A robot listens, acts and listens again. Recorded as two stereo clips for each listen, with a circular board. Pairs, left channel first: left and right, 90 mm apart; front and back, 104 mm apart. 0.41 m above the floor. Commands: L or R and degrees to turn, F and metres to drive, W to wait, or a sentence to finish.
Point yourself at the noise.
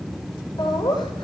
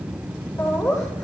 L55
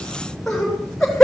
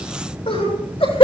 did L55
Found it: laughter, straight ahead, over 4 m away.